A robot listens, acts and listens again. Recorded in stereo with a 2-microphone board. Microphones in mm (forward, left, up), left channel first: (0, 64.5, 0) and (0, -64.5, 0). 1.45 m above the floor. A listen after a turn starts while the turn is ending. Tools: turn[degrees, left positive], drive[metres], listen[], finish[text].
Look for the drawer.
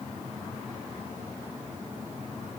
Action: listen[]
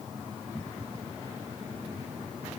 Action: listen[]
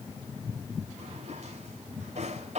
Thought: The drawer: about 65° right or 115° right.
Action: turn[-65]
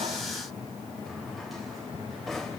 Action: finish[Found it: a drawer, straight ahead.]